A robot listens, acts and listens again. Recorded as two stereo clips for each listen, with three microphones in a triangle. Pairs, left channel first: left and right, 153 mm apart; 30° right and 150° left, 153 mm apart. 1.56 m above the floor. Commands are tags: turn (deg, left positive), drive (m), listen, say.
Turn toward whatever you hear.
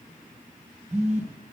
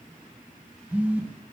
<turn deg="-130"/>
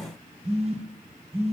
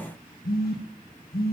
<turn deg="-40"/>
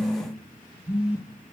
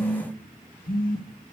<turn deg="-10"/>
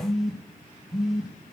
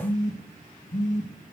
<say>Found it: a phone buzzing, straight ahead, 1 to 2 m away.</say>